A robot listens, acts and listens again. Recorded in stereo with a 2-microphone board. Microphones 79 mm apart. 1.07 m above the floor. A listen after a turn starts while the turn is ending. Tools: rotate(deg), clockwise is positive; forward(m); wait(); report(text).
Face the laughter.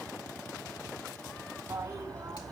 wait()
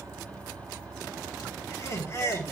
rotate(-35)
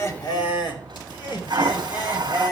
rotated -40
rotate(-120)
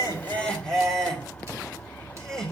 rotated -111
report("Facing the laughter, 2 to 4 m away.")